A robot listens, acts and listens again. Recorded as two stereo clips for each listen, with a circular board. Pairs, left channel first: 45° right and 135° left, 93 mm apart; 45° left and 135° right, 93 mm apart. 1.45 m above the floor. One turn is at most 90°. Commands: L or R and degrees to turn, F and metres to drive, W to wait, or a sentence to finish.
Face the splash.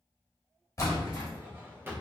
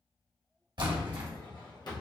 R90
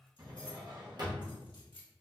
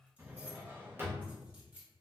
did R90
R10
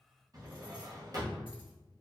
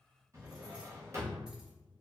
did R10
Facing where the splash came from. I can't hear it now.